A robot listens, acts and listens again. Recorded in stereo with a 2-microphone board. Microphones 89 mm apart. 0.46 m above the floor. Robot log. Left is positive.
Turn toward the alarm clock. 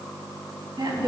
cmd idle
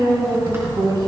cmd idle
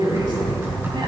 end: I can't make out an alarm clock, only typing on a keyboard and a woman speaking.